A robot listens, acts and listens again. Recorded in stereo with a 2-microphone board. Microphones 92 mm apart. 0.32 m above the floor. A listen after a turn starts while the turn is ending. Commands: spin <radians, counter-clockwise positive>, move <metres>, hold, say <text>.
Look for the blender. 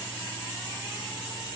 hold
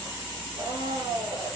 spin -1.05
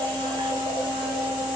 spin -1.05
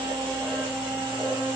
spin -0.26
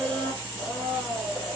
say Facing the blender, 1 to 2 m away.